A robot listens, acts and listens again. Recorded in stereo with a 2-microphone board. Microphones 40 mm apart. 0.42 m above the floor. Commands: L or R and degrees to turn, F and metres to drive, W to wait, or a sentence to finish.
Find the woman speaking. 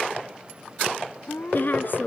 L55
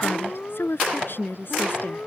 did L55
L60
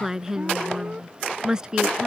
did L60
R20
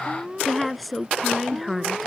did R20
Found it: a woman speaking, straight ahead.